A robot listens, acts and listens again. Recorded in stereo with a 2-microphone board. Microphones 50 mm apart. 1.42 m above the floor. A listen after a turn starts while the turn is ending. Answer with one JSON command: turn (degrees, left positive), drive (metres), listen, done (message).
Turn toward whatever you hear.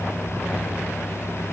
{"listen": true}
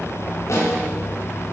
{"turn": 90}
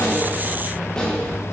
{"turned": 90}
{"turn": 15}
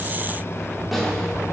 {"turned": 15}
{"done": "Found it: a snare drum, straight ahead, over 4 m away."}